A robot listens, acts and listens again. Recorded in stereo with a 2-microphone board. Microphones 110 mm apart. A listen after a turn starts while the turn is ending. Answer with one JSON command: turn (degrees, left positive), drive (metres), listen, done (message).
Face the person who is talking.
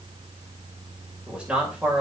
{"turn": -30}
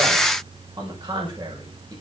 {"turn": -140}
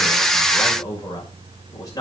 {"turn": 35}
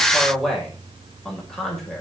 {"done": "Found it: a man speaking, straight ahead."}